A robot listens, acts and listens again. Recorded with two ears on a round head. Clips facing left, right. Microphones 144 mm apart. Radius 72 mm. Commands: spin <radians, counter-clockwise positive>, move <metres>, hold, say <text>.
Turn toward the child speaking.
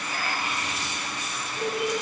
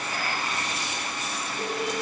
spin 0.35
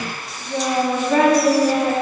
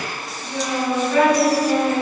spin 2.36
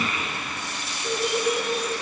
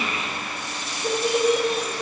spin -0.44
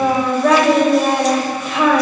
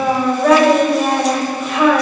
say Facing the child speaking.